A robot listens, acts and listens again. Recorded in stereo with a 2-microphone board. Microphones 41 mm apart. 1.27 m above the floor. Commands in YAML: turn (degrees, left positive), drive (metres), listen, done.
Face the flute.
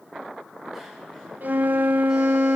turn: -45
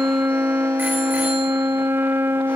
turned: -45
turn: -85
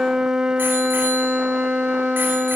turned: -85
turn: -15
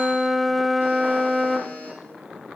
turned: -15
done: "Found it: a flute, straight ahead."